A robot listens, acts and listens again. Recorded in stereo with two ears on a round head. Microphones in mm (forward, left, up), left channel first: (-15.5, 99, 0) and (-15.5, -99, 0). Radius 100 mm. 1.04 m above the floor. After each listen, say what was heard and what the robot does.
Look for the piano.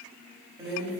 Keep listening.
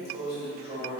Keep listening.
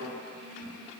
I can't make out a piano, only a drawer.